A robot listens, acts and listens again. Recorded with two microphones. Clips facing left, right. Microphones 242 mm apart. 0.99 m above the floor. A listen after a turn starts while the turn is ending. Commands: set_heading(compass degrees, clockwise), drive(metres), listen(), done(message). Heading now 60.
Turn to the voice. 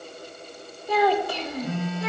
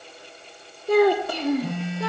set_heading(125)
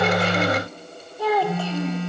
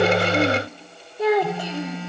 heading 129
set_heading(149)
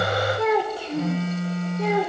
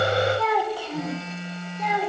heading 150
set_heading(120)
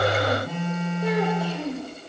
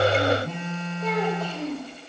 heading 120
set_heading(110)
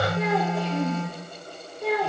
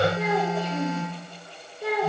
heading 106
done("Found it: a child speaking, straight ahead.")